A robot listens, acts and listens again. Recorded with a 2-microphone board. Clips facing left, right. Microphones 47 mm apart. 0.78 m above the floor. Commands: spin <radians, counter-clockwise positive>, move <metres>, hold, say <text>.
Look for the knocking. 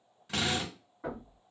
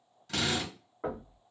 spin -0.70
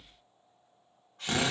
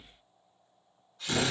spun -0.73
hold
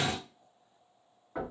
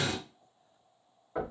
say Found it: knocking, straight ahead.